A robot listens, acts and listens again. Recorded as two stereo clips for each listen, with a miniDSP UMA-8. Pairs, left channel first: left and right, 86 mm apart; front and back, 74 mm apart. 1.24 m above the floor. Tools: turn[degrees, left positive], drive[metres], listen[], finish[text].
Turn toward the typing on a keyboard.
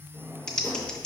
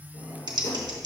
Thought: The typing on a keyboard: 170° left.
Action: turn[170]
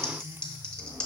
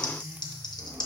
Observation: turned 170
Thought: The typing on a keyboard is now 10° left.
Action: turn[10]
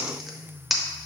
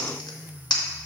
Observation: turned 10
Action: finish[Found it: typing on a keyboard, straight ahead, under 1 m away.]